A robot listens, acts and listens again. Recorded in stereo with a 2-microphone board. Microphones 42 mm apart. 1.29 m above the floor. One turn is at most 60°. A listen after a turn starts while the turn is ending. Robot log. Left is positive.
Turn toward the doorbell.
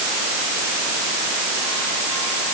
cmd idle
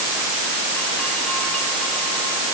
cmd idle
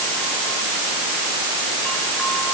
end: I can't make out a doorbell.